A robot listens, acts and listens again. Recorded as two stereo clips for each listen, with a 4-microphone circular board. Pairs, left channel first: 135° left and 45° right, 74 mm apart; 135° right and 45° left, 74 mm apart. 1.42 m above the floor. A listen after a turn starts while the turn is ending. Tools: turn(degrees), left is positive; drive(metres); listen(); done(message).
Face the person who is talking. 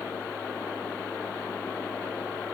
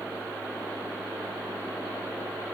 listen()
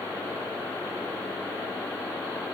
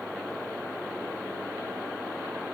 listen()
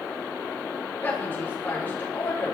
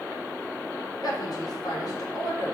turn(degrees=-160)
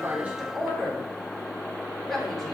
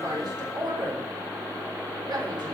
turn(degrees=50)
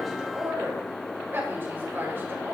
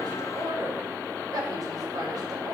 turn(degrees=15)
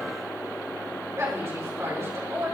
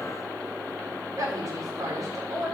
done("Facing the woman speaking.")